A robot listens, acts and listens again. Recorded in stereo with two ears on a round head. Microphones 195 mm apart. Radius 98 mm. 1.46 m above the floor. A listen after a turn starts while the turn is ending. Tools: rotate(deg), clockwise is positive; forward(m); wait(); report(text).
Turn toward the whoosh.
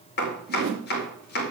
rotate(60)
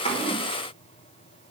wait()
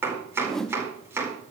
report("Found it: a whoosh, straight ahead.")